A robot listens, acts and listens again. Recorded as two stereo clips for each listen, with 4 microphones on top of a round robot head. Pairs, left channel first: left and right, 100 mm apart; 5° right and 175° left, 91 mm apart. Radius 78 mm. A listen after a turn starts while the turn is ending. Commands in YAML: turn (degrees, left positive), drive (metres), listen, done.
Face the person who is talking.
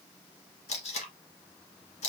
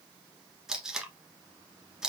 listen: true
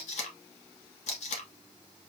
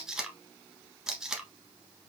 listen: true
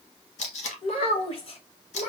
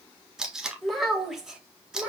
turn: 95
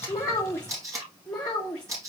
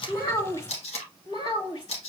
done: "Found it: a child speaking, straight ahead."